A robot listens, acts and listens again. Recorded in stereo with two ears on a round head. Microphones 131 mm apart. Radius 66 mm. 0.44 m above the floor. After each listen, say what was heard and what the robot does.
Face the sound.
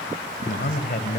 The man speaking: about 55° left or 125° left. Turn 55° left.
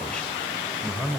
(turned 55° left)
Found it: a man speaking, straight ahead.